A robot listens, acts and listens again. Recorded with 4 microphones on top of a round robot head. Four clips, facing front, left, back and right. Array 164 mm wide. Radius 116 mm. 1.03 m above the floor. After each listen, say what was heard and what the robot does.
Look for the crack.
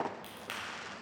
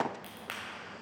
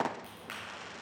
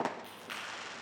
The crack: 70° left. Turn 70° left.
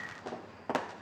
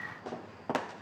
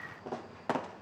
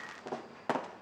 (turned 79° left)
Nothing new. It was at 10° right. Turn 10° right.
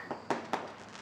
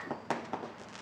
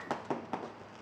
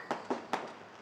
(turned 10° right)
I heard a crack from this way, but can't make it out now.